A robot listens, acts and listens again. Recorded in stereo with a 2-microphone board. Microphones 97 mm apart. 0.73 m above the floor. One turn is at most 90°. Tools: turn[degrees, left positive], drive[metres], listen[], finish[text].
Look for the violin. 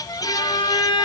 Thought: The violin: about 55° left or 125° left.
Action: turn[55]
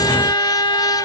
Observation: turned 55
Thought: So it is at 60° left.
Action: turn[60]
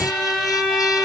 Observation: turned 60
Action: finish[Found it: a violin, straight ahead, 1 to 2 m away.]